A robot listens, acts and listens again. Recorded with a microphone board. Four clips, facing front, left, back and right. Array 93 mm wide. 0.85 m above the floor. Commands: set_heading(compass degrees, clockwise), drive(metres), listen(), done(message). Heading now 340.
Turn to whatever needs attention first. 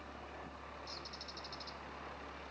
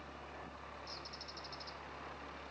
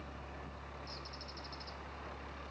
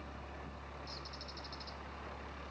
listen()
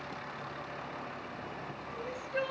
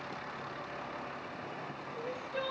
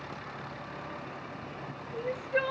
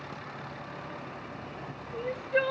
set_heading(105)
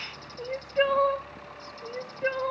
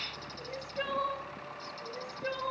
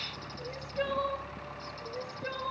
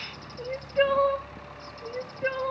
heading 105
set_heading(150)
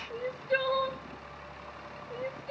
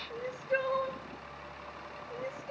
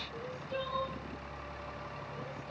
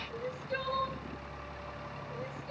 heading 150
set_heading(130)
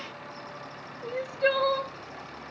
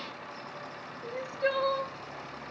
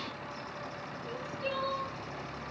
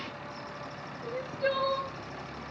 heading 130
done("Found it: crying, straight ahead.")